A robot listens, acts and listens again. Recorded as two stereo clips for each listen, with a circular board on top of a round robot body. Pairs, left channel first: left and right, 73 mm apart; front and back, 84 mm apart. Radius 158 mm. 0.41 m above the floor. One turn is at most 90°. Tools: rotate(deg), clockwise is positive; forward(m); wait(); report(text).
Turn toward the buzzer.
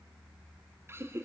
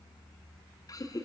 wait()
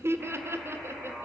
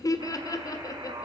rotate(90)
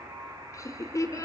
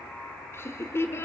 rotate(70)
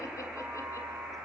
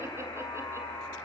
report("Found it: a buzzer, straight ahead.")